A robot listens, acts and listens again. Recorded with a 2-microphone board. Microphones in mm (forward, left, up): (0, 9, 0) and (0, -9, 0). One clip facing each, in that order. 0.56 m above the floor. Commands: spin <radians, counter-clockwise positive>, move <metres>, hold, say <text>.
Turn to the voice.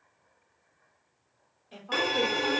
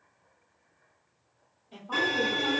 spin 0.87
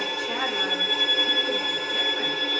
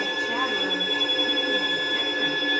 hold
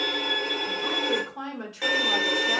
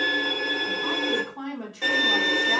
spin 1.22
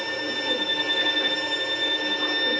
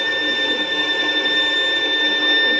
hold
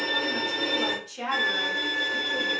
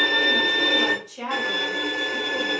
say Found it: a woman speaking, straight ahead.